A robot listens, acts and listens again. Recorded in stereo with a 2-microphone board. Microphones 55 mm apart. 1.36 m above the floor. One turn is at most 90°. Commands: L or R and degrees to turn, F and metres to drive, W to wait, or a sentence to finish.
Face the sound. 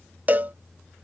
R35
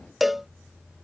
Found it: a cowbell, straight ahead.